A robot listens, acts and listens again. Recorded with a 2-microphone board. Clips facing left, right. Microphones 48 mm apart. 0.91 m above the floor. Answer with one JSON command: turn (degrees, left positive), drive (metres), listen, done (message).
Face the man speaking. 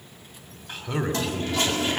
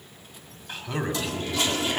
{"turn": 30}
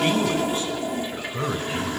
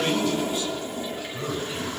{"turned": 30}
{"turn": 140}
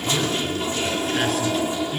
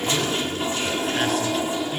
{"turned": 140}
{"done": "Facing the man speaking."}